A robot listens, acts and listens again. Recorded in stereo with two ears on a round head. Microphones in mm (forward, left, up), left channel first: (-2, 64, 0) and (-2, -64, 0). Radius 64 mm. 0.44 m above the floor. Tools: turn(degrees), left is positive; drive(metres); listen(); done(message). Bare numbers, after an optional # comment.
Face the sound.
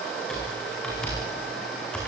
turn(30)
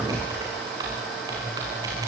# So it is at 25° right.
turn(-25)
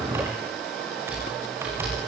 # The typing on a keyboard is now 15° right.
turn(-15)
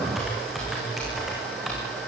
done("Facing the typing on a keyboard.")